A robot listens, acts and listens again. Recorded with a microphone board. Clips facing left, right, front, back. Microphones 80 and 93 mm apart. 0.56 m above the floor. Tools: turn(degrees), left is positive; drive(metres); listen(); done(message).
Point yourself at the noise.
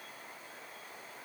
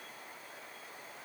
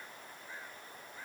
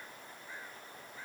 listen()
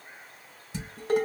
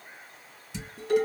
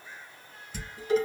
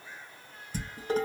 turn(degrees=135)
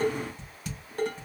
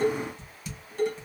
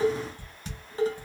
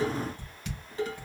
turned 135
turn(degrees=55)
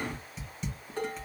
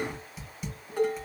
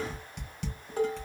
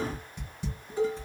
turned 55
done("Found it: dishes clattering, straight ahead, 1 to 2 m away.")